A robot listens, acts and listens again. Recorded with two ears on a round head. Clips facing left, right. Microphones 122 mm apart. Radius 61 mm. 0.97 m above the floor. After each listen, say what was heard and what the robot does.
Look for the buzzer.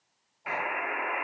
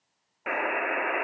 The buzzer: about 65° right or 115° right. Turn 65° right.
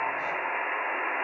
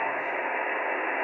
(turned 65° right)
So it is at 45° right. Turn 45° right.
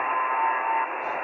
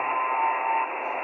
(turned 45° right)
The buzzer is now 10° right. Turn 10° right.
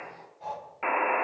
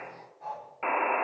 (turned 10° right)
Found it: a buzzer, straight ahead.